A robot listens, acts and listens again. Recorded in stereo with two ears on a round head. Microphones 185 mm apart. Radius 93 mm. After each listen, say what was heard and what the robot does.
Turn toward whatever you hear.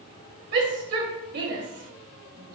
The shout: about 60° right or 120° right. Turn 60° right.
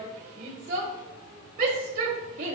So it is at 50° right. Turn 50° right.
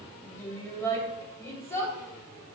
The shout is now 15° left. Turn 15° left.
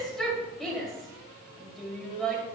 Facing the shout, 2 to 4 m away.